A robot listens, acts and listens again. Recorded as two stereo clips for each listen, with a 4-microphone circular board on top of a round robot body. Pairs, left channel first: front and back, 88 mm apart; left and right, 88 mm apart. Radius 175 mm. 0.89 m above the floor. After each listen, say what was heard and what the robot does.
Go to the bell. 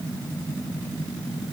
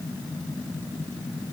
Keep listening.
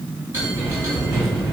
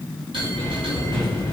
The bell: 115° right. Turn 115° right.
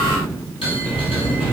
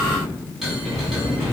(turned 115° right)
Drive 1.0 m forward.
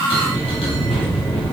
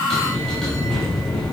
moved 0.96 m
Drive 1.0 m forward.
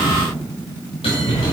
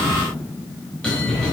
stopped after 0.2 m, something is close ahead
The bell is now 10° left. Turn 10° left.
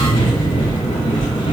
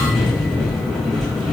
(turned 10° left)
I am next to the bell.